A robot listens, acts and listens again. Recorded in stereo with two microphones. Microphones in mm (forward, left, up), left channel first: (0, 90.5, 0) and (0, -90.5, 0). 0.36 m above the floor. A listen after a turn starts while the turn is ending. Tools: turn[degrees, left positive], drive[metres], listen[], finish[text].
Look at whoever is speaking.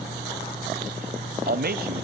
Thought: The man speaking: about 60° right or 120° right.
Action: turn[-60]
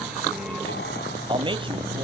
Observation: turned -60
Thought: So it is at 35° right.
Action: turn[-35]
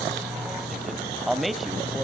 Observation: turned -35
Action: finish[Facing the man speaking.]